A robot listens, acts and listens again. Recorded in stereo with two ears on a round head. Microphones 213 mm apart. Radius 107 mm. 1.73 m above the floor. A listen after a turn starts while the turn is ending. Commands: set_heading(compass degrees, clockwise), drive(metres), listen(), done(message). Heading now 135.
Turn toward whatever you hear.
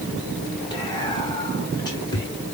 set_heading(120)
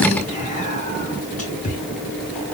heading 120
set_heading(330)
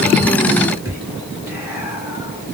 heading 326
set_heading(336)
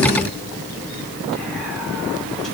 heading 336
listen()
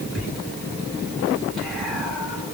done("Found it: whispering, straight ahead, 1 to 2 m away.")